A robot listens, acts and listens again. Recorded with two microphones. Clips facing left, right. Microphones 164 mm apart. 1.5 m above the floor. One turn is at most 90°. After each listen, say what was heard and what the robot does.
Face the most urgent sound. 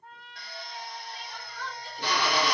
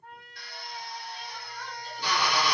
Turn 90° left.
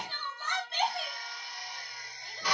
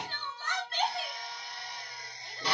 So it is at 15° left. Turn 15° left.
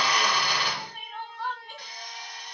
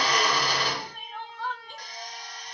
Facing the crying, 1 to 2 m away.